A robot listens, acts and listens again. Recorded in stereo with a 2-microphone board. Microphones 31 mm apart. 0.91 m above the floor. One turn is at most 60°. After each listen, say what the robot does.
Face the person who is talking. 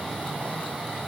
Keep listening.
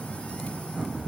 Keep listening.
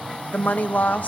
Turn 55° left.
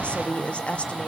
Turn 50° left.
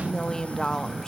Turn 20° left.
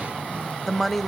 Facing the woman speaking, under 1 m away.